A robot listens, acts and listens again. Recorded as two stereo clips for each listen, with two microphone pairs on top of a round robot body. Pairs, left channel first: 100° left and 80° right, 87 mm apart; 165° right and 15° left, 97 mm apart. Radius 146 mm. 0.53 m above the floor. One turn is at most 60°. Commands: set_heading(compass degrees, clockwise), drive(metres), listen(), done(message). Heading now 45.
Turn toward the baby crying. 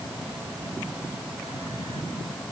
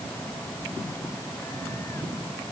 listen()
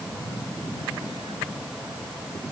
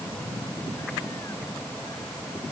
listen()
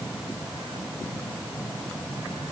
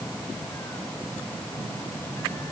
done("I can't make out a baby crying.")